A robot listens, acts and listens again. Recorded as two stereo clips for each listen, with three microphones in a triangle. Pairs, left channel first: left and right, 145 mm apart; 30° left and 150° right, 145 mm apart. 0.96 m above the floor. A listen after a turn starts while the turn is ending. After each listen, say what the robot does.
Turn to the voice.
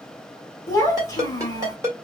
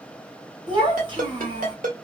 Turn 160° left.
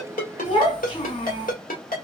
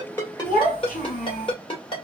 Turn 40° left.
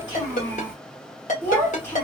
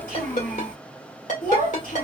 Turn 15° left.
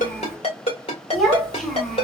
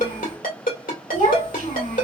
Found it: a child speaking, straight ahead, 2 to 4 m away.